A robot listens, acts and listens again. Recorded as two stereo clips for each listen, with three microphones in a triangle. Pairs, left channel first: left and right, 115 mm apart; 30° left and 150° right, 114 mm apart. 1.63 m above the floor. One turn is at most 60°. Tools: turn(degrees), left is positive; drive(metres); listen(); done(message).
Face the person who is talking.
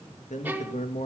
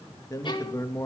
turn(degrees=60)
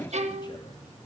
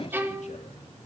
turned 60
turn(degrees=35)
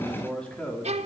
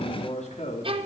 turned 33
turn(degrees=10)
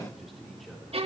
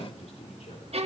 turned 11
listen()
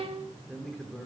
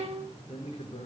done("Found it: a man speaking, straight ahead, over 4 m away.")